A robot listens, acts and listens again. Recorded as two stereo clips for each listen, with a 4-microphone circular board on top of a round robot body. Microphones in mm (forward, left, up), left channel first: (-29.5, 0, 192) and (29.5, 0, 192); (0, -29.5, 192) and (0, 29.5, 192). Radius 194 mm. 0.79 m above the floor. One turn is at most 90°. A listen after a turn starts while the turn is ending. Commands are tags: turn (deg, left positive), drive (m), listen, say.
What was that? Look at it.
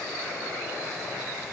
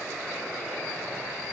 <listen/>
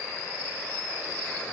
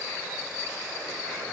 <listen/>
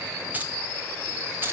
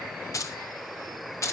<turn deg="-55"/>
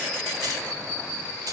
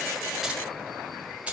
<turn deg="20"/>
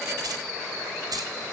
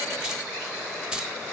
<turn deg="10"/>
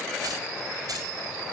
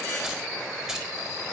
<listen/>
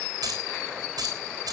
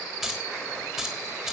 <say>Facing the keys jangling.</say>